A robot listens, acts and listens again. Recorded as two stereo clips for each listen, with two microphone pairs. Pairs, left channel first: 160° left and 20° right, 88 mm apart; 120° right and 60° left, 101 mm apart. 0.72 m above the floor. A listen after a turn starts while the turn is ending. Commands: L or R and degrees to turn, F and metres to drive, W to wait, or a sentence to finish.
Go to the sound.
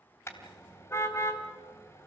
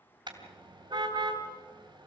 L100
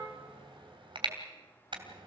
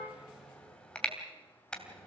R40
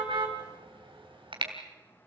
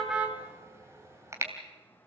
F1.0
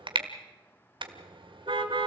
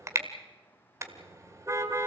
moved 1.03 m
F1.0
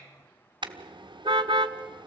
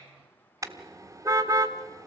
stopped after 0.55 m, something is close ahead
Arrived at the car horn, straight ahead.